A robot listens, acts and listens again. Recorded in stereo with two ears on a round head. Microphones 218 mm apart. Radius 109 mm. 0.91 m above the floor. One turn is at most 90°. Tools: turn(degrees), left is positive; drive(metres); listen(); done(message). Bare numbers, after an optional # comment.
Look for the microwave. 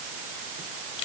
listen()
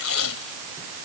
listen()
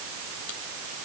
done("I can't make out a microwave to turn to.")